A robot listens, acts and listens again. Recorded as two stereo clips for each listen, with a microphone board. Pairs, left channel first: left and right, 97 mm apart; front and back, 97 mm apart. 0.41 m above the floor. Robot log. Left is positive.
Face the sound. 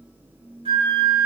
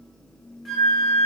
note: The flute: 90° right.
cmd yaw -90
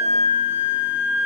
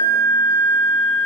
note: The flute is now 25° right.
cmd yaw -25
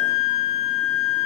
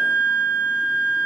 note: The flute is now 10° right.
cmd yaw -10
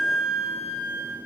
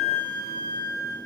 end: Found it: a flute, straight ahead, under 1 m away.